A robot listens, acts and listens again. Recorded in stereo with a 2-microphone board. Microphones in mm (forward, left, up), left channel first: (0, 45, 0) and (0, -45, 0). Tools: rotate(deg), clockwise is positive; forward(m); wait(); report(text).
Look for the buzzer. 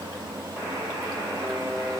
rotate(15)
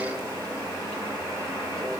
report("Facing the buzzer.")